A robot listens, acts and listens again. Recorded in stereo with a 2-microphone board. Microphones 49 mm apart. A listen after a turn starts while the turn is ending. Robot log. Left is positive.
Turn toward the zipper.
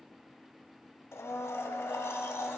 cmd idle
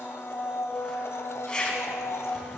note: The zipper: about 20° left or 160° left.
cmd yaw +20
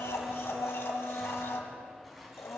end: Facing the zipper, 2 to 4 m away.